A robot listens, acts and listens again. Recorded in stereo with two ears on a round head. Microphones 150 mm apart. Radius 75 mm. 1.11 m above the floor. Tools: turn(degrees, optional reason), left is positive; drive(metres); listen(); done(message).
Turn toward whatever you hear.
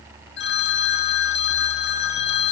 turn(degrees=70, reason="The phone ringing: about 70° left or 110° left.")
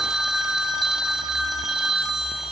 done("Facing the phone ringing, 1 to 2 m away.")